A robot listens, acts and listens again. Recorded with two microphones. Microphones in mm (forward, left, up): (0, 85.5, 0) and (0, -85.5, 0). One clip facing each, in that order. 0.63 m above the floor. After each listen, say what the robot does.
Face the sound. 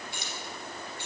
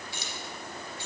Turn 65° left.
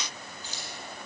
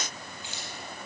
Turn 40° left.
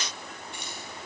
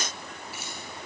Found it: keys jangling, straight ahead.